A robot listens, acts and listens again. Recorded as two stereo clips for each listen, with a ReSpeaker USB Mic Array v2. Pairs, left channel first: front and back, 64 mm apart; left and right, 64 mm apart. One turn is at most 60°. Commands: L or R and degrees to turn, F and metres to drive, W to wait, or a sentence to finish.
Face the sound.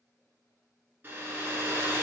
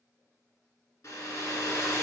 L60
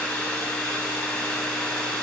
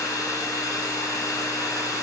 L60
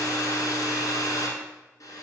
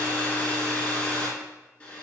L20
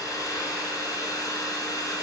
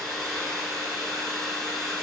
Found it: a hair dryer, straight ahead.